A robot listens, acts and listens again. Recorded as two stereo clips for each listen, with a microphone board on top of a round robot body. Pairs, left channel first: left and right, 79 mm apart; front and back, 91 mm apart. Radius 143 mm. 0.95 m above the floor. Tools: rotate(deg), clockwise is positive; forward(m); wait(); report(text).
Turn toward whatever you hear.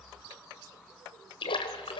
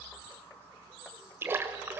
rotate(-110)
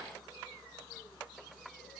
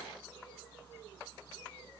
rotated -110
report("Facing where the splash came from. I can't hear it now.")